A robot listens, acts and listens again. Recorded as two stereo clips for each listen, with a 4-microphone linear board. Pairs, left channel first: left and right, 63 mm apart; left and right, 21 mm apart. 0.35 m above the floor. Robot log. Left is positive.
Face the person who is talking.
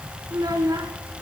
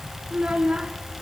cmd yaw -90
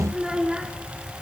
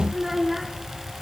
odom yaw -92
note: So it is at 10° right.
cmd yaw -10
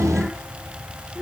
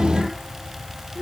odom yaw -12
cmd idle
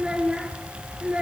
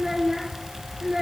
note: The child speaking is now 15° right.
cmd yaw -15
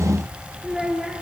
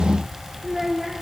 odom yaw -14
end: Facing the child speaking, 2 to 4 m away.